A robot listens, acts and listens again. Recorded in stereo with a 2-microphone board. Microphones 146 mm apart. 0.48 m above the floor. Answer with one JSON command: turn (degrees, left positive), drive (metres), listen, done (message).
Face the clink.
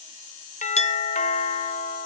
{"turn": 50}
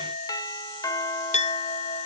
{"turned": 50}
{"turn": 65}
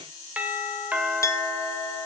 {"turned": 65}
{"turn": 25}
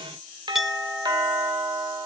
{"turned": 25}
{"done": "Found it: a clink, straight ahead, under 1 m away."}